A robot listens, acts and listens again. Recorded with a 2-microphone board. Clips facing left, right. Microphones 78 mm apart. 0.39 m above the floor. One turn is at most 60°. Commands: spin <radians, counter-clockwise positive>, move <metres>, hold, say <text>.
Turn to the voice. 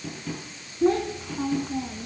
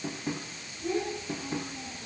spin 1.05
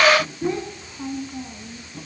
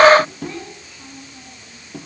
spin 0.52
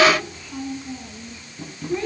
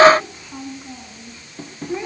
spin -0.26
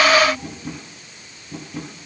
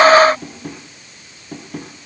hold
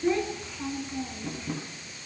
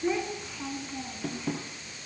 say Facing the child speaking, 2 to 4 m away.